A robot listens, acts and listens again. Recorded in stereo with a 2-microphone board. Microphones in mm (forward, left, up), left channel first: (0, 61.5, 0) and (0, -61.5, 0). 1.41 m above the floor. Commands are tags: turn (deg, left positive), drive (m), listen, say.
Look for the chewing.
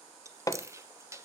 <turn deg="-25"/>
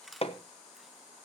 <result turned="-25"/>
<say>Facing the chewing, under 1 m away.</say>